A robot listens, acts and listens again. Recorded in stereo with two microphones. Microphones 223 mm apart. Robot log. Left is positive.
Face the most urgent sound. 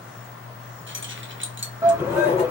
cmd yaw -30
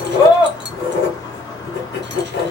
note: So it is at 20° left.
cmd yaw +20
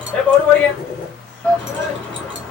end: Found it: a shout, straight ahead, 1 to 2 m away.